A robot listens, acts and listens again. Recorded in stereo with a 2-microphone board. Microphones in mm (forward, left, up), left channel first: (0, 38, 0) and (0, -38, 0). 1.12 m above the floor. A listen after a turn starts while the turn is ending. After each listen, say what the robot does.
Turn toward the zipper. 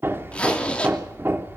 Turn 15° left.
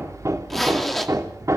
Facing the zipper.